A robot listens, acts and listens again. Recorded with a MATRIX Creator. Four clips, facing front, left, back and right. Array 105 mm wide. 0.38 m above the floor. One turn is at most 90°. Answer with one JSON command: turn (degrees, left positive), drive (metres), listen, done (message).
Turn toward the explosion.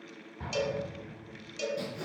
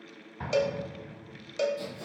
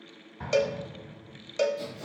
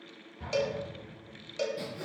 {"turn": 90}
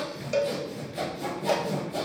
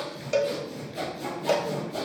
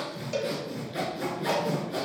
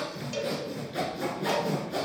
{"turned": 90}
{"turn": 15}
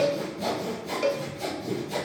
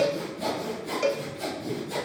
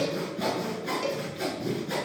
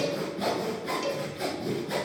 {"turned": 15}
{"done": "I heard an explosion from this way, but can't make it out now."}